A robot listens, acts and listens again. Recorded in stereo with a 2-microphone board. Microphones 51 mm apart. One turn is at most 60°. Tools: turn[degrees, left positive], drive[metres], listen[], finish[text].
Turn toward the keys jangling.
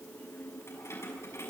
Thought: The keys jangling: about 60° left or 120° left.
Action: turn[60]
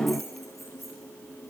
Action: finish[Found it: keys jangling, straight ahead.]